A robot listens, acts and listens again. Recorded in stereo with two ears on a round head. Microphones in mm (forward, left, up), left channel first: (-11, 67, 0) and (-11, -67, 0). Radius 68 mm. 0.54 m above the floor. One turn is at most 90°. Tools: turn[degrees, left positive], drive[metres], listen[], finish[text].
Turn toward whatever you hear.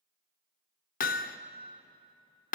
Thought: The hammering: about 60° left or 120° left.
Action: turn[60]
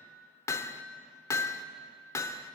Thought: So it is at 20° left.
Action: turn[20]
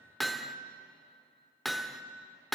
Action: finish[Found it: hammering, straight ahead.]